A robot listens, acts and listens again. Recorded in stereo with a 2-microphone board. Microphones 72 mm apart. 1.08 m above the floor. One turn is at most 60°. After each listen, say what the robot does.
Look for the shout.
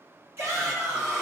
Turn 40° right.
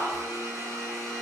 Turn 60° right.
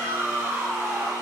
Turn 35° right.
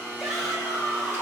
Found it: a shout, straight ahead, 1 to 2 m away.